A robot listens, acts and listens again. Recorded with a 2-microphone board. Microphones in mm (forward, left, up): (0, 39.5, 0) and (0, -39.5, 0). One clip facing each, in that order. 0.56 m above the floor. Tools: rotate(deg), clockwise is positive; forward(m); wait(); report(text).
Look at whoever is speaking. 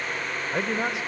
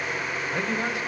rotate(-20)
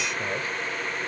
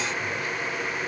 wait()
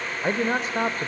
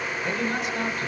rotate(-135)
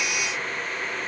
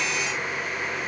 wait()
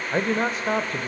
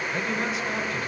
rotate(-45)
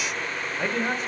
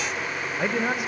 rotate(10)
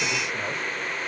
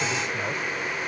wait()
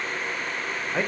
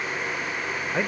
report("Facing the man speaking.")